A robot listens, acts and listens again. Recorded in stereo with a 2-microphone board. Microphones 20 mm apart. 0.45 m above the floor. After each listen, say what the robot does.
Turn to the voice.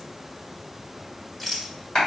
Keep listening.
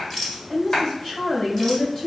Turn 45° left.
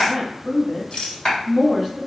Turn 10° left.
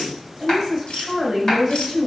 Found it: a woman speaking, straight ahead.